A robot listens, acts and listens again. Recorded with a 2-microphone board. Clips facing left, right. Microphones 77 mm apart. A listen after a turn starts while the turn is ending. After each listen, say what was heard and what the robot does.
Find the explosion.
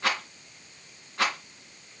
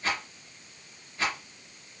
Keep listening.
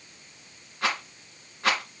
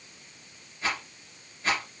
Keep listening.
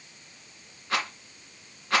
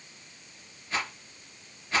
I can't make out an explosion to turn to.